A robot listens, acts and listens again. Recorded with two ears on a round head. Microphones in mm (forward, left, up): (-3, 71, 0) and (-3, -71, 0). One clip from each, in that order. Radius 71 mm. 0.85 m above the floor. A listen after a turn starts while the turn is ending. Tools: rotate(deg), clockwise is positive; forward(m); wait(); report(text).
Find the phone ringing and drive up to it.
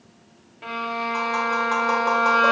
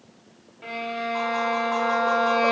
wait()
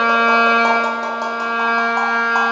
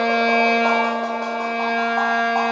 wait()
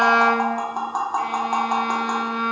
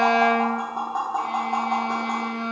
report("I can't make out a phone ringing to turn to.")